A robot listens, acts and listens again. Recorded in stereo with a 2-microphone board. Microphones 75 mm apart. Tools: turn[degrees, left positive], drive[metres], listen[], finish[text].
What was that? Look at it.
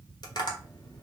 Thought: The tapping: about 70° left or 110° left.
Action: turn[70]
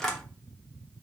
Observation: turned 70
Action: finish[Found it: tapping, straight ahead, under 1 m away.]